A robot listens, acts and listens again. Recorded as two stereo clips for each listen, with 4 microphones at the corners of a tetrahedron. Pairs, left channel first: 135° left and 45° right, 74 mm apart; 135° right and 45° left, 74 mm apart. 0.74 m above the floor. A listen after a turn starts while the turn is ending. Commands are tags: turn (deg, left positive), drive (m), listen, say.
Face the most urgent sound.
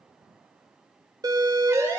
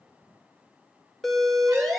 <turn deg="-45"/>
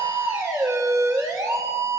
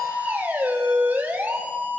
<turn deg="-15"/>
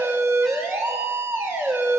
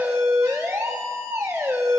<say>Facing the siren, 2 to 4 m away.</say>